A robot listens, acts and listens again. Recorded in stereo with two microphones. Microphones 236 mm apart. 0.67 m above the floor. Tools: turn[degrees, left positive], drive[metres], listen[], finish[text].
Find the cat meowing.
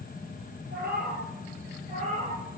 Thought: The cat meowing: about 30° right or 150° right.
Action: turn[-30]
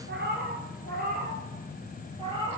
Thought: The cat meowing: about 20° right or 160° right.
Action: turn[-20]
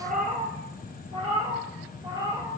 Thought: The cat meowing: about 20° right or 160° right.
Action: turn[-20]
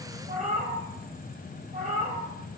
Thought: The cat meowing: about 40° right or 140° right.
Action: turn[-40]
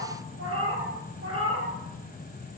Thought: So it is at 105° right.
Action: turn[-105]
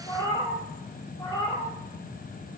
Thought: The cat meowing is now 20° left.
Action: turn[20]
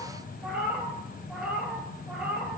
Action: finish[Facing the cat meowing, 2 to 4 m away.]